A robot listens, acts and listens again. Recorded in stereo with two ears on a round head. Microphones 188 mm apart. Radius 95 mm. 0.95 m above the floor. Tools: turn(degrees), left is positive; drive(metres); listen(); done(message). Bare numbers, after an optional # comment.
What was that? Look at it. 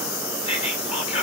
# The whispering: about 30° left or 150° left.
turn(30)
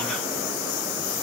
listen()
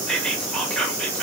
done("Facing the whispering.")